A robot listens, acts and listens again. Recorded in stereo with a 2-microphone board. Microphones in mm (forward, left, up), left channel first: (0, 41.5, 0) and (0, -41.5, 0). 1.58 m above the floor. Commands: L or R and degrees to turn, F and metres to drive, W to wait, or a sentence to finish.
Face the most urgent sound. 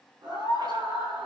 R70
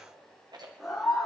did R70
Facing the scream, over 4 m away.